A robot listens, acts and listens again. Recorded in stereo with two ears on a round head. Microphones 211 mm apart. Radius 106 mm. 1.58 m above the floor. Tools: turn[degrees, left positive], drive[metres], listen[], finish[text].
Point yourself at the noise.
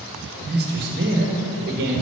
Thought: The man speaking: about 45° right or 135° right.
Action: turn[-45]
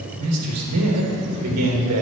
Thought: So it is at 85° right.
Action: turn[-85]
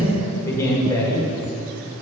Thought: The man speaking is now 15° left.
Action: turn[15]
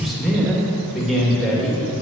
Action: finish[Found it: a man speaking, straight ahead.]